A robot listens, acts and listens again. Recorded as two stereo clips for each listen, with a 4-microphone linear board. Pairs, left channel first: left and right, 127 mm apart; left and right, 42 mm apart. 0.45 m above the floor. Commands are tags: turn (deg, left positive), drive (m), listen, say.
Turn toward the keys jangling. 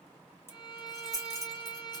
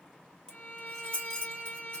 <turn deg="30"/>
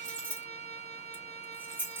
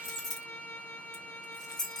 <turn deg="15"/>
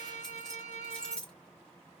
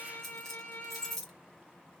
<say>Facing the keys jangling, 2 to 4 m away.</say>